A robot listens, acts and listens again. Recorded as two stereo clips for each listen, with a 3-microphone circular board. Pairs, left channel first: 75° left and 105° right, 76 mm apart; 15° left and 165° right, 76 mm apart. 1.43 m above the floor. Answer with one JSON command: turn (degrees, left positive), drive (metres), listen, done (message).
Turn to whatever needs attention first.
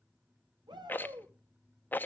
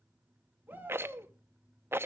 {"turn": -100}
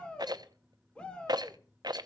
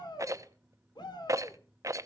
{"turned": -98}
{"done": "Found it: a shout, straight ahead."}